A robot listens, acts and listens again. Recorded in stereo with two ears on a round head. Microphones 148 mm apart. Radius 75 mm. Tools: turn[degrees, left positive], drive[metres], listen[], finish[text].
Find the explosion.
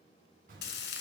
Thought: The explosion: about 60° right or 120° right.
Action: turn[-60]
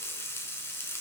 Action: listen[]
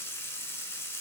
Action: finish[I heard an explosion, but can't make it out now. It was about straight ahead or 60° right.]